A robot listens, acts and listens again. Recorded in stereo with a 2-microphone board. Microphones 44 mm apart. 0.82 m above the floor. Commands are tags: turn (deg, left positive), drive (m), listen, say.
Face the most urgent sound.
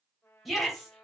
<turn deg="30"/>
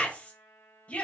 <turn deg="145"/>
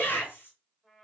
<turn deg="55"/>
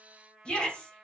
<turn deg="20"/>
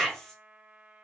<say>Found it: a shout, straight ahead, 2 to 4 m away.</say>